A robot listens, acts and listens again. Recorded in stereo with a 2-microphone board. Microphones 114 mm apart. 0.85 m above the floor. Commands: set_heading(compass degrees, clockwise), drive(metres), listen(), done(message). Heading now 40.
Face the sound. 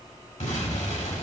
set_heading(310)
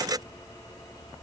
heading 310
done("Facing where the explosion came from. I can't hear it now.")